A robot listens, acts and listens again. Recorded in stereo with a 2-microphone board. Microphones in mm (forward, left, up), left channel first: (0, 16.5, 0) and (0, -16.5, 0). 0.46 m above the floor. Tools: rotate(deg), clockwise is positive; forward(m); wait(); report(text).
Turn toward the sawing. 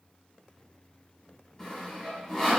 rotate(-30)
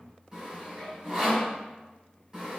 rotate(20)
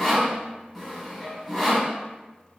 report("Found it: sawing, straight ahead.")